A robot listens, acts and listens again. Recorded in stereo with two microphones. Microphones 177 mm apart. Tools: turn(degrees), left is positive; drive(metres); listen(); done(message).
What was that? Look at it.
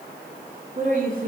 turn(degrees=-50)
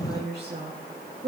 turn(degrees=-70)
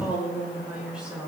done("Found it: a woman speaking, straight ahead.")